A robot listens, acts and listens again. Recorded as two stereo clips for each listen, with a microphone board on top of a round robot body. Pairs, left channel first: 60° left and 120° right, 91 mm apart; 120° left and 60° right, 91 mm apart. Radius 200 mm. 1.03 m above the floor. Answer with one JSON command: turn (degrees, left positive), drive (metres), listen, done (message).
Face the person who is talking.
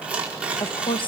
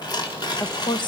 {"turn": 85}
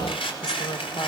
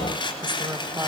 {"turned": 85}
{"listen": true}
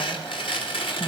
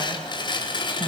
{"listen": true}
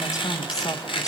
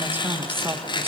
{"turn": 10}
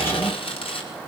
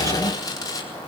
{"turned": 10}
{"listen": true}
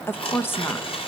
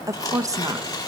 {"done": "Facing the woman speaking."}